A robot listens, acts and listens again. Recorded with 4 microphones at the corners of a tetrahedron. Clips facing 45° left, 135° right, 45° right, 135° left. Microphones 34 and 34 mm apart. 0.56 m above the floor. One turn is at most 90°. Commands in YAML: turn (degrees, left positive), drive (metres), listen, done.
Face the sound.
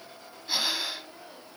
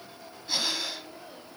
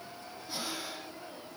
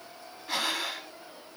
turn: 90
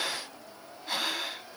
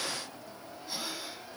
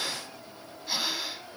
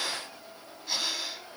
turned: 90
turn: 35
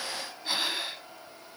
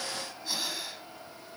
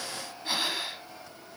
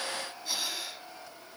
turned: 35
done: "Found it: breathing, straight ahead, under 1 m away."